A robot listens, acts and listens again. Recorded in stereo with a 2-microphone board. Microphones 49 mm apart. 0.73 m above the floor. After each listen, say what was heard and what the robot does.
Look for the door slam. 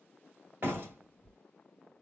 The door slam: about 45° right or 135° right. Turn 45° right.
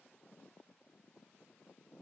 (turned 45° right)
Keep listening.
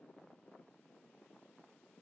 I heard a door slam, but can't make it out now. It was about straight ahead or 90° right.